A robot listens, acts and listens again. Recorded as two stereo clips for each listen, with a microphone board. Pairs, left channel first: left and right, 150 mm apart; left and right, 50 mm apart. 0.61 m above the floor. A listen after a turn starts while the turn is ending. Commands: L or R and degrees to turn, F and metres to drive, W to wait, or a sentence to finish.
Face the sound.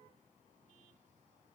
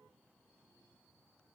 W
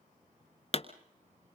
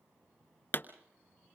L50
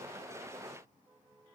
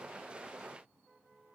W
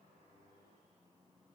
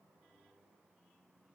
I heard a pop, but can't make it out now. It was about straight ahead or 80° left.